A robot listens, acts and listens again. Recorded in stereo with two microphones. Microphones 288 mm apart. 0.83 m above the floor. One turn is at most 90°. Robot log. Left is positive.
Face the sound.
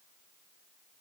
cmd idle
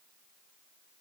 cmd idle
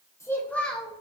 cmd yaw +30
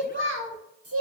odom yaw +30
note: So it is at 55° right.
cmd yaw -55
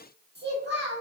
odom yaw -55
note: The child speaking is now 40° right.
cmd yaw -40
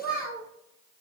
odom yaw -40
end: Facing the child speaking, 1 to 2 m away.